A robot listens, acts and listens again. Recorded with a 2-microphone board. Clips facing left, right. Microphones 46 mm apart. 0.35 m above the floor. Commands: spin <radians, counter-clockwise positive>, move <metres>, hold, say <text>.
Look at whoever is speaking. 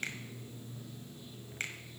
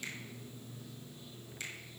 hold
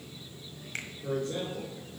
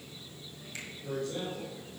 spin 0.70
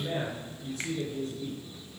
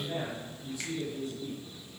spin 1.83
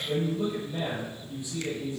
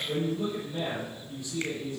spin 0.35
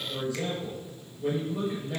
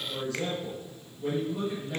say Found it: a man speaking, straight ahead, over 4 m away.